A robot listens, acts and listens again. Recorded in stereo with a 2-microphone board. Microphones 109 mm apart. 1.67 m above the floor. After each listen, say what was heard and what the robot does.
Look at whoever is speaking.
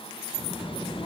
The child speaking: about 70° left or 110° left. Turn 70° left.
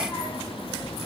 So it is at 30° left. Turn 30° left.
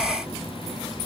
Facing the child speaking, 2 to 4 m away.